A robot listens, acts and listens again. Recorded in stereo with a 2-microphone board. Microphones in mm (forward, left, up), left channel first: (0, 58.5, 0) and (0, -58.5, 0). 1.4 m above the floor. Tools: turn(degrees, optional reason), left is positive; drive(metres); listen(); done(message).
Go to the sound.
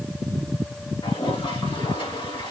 turn(degrees=45, reason="The toilet flushing: about 45° left or 135° left.")
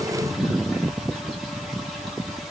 listen()
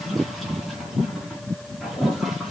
listen()
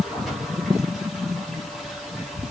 drive(metres=1.0)
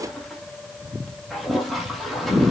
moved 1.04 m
drive(metres=1.0)
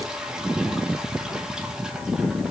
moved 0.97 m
drive(metres=1.0)
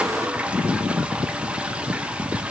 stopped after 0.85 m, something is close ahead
turn(degrees=-10, reason="The toilet flushing is now 10° right.")
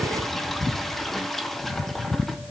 done("I am next to the toilet flushing.")